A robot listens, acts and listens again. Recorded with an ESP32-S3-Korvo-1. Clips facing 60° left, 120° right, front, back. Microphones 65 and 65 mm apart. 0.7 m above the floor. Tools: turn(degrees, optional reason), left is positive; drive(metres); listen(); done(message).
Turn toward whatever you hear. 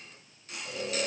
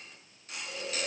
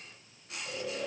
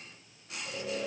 turn(degrees=105, reason="The snoring: 105° left.")
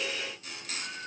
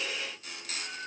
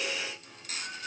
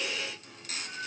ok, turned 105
done("Found it: snoring, straight ahead.")